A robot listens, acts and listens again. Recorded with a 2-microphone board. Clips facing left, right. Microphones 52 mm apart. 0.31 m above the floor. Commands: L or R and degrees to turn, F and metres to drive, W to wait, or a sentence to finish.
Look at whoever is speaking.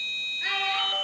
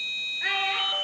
R30
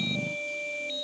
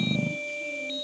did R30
W
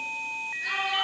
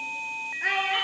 R135
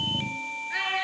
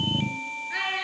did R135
Found it: a child speaking, straight ahead.